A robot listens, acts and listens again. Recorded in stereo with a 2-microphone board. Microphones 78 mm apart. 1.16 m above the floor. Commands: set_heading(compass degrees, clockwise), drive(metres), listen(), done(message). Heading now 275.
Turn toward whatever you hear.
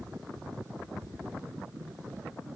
listen()
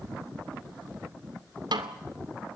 set_heading(5)
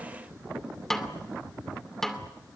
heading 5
done("Found it: a snare drum, straight ahead, 2 to 4 m away.")